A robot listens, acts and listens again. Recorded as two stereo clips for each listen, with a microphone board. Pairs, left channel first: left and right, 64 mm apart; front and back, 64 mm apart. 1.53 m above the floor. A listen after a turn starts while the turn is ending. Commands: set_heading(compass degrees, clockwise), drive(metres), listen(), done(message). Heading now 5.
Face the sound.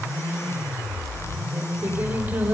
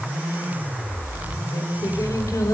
set_heading(30)
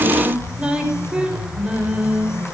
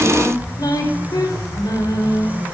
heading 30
set_heading(45)
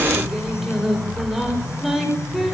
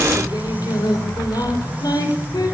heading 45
done("Found it: singing, straight ahead.")